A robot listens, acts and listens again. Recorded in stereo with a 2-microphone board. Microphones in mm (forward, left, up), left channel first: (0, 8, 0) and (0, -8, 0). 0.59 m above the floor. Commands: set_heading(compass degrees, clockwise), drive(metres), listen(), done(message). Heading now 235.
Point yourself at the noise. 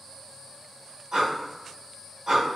set_heading(280)
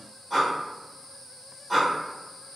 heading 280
done("Found it: breathing, straight ahead.")